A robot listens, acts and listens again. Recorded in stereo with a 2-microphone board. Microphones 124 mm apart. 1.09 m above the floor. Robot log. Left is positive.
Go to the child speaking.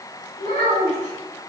cmd yaw +90
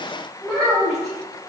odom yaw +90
cmd fwd 1.0
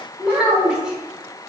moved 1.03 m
cmd fwd 1.0
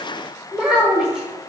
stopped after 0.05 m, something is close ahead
end: I am next to the child speaking.